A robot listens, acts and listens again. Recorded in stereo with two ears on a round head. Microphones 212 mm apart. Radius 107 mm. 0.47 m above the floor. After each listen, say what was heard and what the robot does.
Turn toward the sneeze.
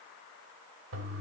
Keep listening.
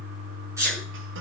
Turn 30° right.
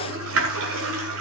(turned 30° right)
Keep listening.
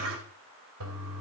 I heard a sneeze, but can't make it out now. It was about 15° left or 135° right.